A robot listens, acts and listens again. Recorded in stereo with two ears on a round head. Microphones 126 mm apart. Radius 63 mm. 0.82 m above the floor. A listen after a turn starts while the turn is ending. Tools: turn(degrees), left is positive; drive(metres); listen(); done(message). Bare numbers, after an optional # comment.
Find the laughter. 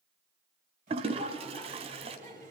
# The laughter: about 55° right or 125° right.
turn(-55)
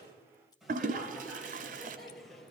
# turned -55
done("Facing the laughter, 2 to 4 m away.")